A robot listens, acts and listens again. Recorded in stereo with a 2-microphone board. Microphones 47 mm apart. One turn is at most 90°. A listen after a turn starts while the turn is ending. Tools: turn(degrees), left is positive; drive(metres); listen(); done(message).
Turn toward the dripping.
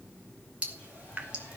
turn(degrees=-30)
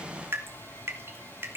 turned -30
turn(degrees=-90)
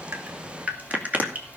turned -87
turn(degrees=-30)
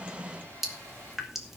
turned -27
done("Found it: dripping, straight ahead, 2 to 4 m away.")